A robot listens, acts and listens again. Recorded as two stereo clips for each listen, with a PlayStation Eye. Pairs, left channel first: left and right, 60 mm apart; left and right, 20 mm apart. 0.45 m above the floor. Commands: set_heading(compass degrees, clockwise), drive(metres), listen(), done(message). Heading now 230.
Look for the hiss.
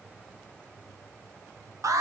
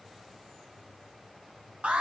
listen()
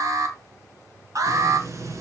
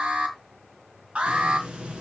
set_heading(290)
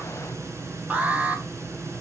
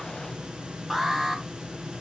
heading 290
set_heading(345)
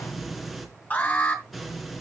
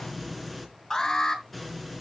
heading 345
done("Facing the hiss, 2 to 4 m away.")